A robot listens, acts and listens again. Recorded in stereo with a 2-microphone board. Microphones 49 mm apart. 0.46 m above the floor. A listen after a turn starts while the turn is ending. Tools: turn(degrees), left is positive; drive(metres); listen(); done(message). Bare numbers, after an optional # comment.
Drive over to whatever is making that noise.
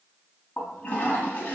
# The toilet flushing: about 30° left or 150° left.
turn(30)
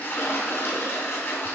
# So it is at 120° left.
turn(120)
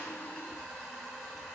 drive(1.0)
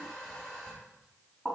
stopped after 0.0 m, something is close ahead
# The toilet flushing is now 10° left.
turn(10)
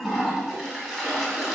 done("Something is in my way. I am facing the toilet flushing but have not reached it.")